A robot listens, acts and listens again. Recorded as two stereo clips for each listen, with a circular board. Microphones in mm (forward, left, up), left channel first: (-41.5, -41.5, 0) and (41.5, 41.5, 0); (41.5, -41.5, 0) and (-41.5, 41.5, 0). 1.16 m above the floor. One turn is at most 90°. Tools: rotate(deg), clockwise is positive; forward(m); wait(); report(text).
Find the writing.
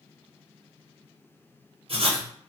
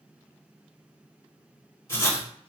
rotate(-20)
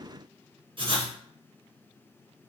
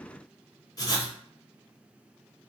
rotate(-10)
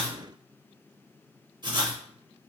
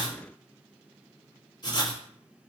report("Facing the writing.")